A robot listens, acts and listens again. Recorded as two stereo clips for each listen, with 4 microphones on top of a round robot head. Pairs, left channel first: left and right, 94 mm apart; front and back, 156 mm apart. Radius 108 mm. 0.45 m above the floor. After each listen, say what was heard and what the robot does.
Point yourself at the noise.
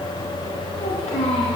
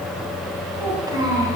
The child speaking: 115° left. Turn 115° left.
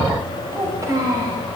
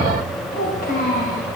The child speaking is now 40° right. Turn 40° right.
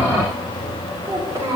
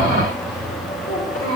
The child speaking is now 40° right. Turn 40° right.
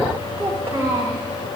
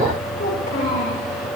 The child speaking is now 35° right. Turn 35° right.
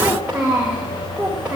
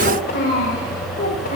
The child speaking is now 15° right. Turn 15° right.
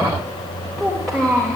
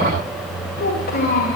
Found it: a child speaking, straight ahead.